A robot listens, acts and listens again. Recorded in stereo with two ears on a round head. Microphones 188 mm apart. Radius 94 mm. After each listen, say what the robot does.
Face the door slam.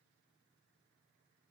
Keep listening.
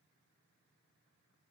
Keep listening.
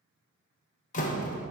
Turn 40° left.
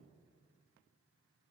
Keep listening.
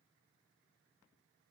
I heard a door slam, but can't make it out now. It was about straight ahead or 100° left.